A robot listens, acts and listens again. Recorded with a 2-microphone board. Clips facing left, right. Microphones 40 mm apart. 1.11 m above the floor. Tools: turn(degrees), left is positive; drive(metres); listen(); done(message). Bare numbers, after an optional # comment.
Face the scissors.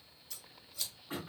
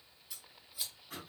turn(-30)
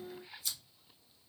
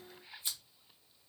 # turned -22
# So it is at 140° right.
turn(-140)
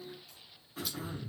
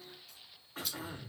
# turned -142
done("Facing the scissors, 1 to 2 m away.")